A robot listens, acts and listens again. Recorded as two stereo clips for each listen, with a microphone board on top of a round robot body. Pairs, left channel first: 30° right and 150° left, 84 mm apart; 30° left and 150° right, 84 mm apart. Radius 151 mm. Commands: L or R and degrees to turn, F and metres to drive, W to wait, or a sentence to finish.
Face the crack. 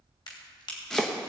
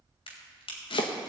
Facing the crack.